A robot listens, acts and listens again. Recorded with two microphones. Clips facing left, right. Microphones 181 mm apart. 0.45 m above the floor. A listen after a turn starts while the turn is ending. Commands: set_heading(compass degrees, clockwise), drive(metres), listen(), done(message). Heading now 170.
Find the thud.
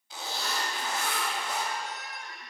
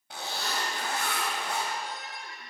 listen()
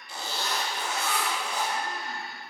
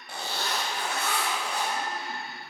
listen()
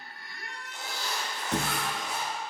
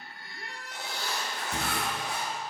set_heading(80)
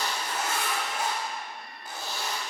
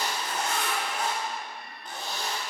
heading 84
done("I heard a thud from this way, but can't make it out now.")